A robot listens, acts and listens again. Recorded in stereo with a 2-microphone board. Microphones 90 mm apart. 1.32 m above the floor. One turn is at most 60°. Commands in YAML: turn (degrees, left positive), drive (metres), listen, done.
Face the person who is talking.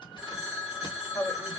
turn: 50
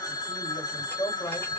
turn: 60
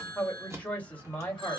turn: 15
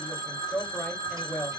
done: "Facing the woman speaking, 1 to 2 m away."